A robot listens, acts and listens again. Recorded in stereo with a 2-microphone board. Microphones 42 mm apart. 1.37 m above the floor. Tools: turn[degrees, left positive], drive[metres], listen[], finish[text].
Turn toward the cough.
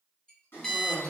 Thought: The cough: about 75° left or 105° left.
Action: turn[75]
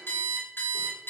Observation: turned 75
Action: listen[]
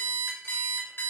Action: listen[]
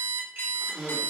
Action: finish[Found it: a cough, straight ahead.]